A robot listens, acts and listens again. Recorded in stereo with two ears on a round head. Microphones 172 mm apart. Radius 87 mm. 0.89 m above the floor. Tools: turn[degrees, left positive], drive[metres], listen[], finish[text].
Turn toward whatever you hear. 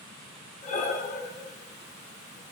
Thought: The breathing: about 40° left or 140° left.
Action: turn[40]
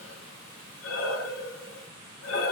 Thought: So it is at 100° left.
Action: turn[100]
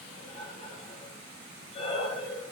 Thought: The breathing is now 30° left.
Action: turn[30]
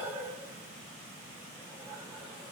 Thought: The breathing is now 10° right.
Action: turn[-10]
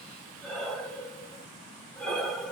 Action: finish[Facing the breathing.]